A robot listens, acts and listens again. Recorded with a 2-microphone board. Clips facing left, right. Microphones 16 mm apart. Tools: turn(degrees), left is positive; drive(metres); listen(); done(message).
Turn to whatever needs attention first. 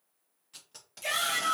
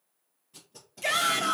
turn(degrees=-15)
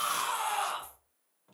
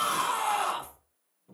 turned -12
done("Found it: a shout, straight ahead.")